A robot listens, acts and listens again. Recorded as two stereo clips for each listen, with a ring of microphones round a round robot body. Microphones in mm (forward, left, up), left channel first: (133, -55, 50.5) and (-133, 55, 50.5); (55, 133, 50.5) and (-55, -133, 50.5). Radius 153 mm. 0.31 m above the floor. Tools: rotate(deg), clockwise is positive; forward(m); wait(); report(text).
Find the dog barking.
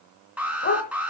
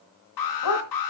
rotate(-35)
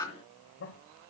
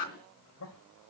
wait()
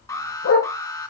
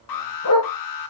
rotate(-25)
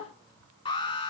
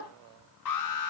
wait()
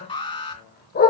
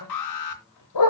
rotate(-40)
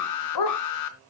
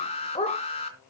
report("Found it: a dog barking, straight ahead.")